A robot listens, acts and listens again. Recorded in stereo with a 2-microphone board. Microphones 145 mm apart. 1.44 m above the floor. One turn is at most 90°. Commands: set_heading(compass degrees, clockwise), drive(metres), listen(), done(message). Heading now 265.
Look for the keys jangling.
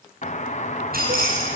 set_heading(355)
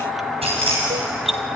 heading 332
set_heading(12)
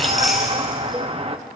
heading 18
done("Found it: keys jangling, straight ahead, over 4 m away.")